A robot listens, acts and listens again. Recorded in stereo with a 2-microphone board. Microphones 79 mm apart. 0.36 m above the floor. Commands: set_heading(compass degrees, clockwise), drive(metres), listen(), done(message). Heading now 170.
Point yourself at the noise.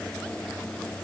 listen()
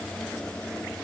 listen()
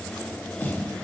set_heading(140)
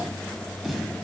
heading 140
done("Facing the snare drum, 2 to 4 m away.")